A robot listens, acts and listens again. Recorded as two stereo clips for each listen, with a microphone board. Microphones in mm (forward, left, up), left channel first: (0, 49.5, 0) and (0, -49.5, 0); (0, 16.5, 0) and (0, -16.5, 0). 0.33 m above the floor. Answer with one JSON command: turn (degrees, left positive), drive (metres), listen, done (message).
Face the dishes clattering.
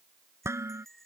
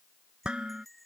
{"turn": -25}
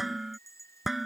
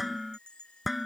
{"done": "Found it: dishes clattering, straight ahead."}